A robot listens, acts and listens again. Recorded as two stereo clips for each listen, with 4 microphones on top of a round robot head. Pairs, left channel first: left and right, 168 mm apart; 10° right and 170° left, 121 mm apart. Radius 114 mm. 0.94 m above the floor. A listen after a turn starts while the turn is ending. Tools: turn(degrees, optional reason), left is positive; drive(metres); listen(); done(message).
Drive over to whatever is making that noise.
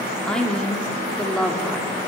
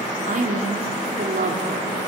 turn(degrees=175, reason="The woman speaking: 175° left.")
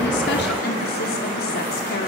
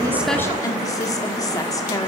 turn(degrees=55, reason="The woman speaking is now 55° left.")
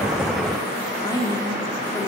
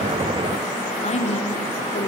turn(degrees=20, reason="The woman speaking is now 20° left.")
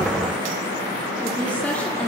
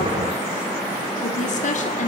drive(metres=1.0)
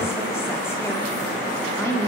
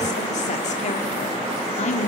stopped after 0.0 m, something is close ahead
turn(degrees=10, reason="The woman speaking is now 10° left.")
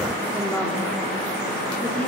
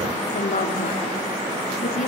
done("Something is in my way. I am facing the woman speaking but have not reached it.")